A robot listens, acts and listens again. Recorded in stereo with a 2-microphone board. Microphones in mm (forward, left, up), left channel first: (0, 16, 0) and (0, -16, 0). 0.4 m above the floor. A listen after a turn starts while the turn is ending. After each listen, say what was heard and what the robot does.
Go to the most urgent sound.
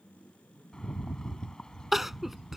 Turn 30° right.
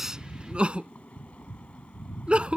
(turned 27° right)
So it is at 145° right. Turn 145° right.
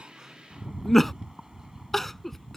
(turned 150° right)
Drive 1.0 m forward.
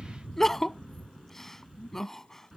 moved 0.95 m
The crying is now 10° left. Turn 10° left.
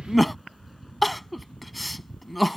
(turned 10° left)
Drive 1.0 m forward.
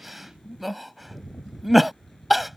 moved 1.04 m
Drive 1.0 m forward.
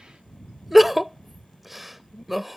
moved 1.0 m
Drive 1.0 m forward.
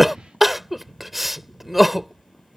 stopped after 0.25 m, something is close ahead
The crying is now 10° right. Turn 10° right.
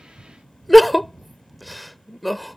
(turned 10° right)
Arrived at the crying, straight ahead.